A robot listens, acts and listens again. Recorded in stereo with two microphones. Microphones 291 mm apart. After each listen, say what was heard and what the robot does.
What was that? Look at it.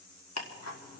The ticking: about 60° left or 120° left. Turn 60° left.
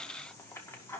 So it is at 10° left. Turn 10° left.
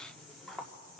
Found it: ticking, straight ahead.